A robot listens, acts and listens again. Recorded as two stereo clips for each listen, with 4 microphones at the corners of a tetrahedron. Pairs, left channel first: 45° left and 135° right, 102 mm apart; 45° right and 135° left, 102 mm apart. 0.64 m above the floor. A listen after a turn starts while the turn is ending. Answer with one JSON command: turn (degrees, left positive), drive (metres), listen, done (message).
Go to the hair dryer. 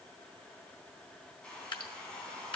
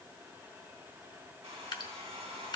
{"turn": 125}
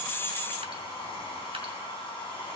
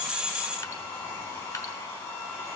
{"turn": 15}
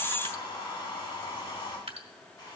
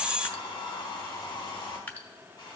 {"drive": 1.0}
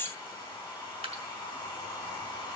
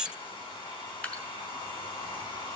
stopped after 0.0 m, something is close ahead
{"done": "Blocked. The hair dryer is further on, straight ahead."}